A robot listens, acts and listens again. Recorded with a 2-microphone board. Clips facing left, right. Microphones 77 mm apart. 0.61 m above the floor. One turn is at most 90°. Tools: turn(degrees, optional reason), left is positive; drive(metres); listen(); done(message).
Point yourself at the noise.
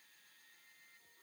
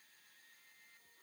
listen()
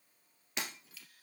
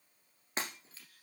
turn(degrees=-35, reason="The breaking glass: about 35° right or 145° right.")
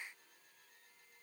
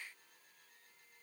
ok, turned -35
listen()
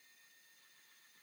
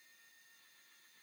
done("I heard breaking glass, but can't make it out now. It was about straight ahead or 110° right.")